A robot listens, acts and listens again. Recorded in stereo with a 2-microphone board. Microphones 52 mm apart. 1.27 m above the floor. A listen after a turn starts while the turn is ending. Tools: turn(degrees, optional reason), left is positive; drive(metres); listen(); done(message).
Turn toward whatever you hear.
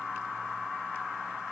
listen()
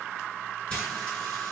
turn(degrees=20, reason="The frying: about 20° left or 160° left.")
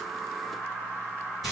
done("Found it: frying, straight ahead, over 4 m away.")